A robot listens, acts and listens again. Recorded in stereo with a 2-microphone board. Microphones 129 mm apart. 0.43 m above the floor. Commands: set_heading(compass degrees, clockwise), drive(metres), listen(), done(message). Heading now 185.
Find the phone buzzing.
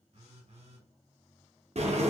set_heading(240)
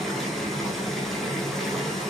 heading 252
listen()
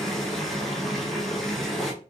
listen()
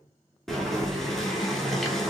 done("I heard a phone buzzing, but can't make it out now. It was about 10° left or 55° right.")